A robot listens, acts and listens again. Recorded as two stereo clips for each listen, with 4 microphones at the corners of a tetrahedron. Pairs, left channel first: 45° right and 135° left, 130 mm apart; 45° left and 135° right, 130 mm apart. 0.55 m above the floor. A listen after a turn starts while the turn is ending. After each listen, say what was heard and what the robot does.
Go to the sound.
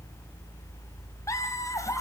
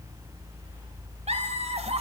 The laughter: 105° right. Turn 105° right.
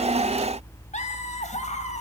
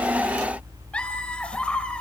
The laughter is now 35° right. Turn 35° right.
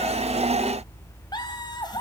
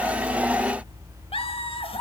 The laughter is now 10° left. Turn 10° left.
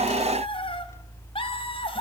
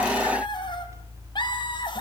Drive 1.0 m forward.
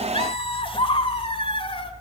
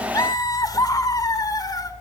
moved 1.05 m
The laughter is now 10° right. Turn 10° right.
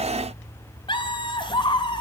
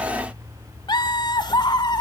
Drive 1.0 m forward.
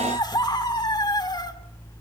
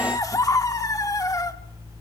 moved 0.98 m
Drive 1.0 m forward.
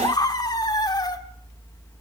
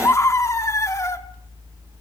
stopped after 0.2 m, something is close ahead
The laughter is now 10° right. Turn 10° right.
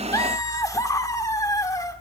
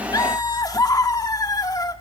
I am next to the laughter.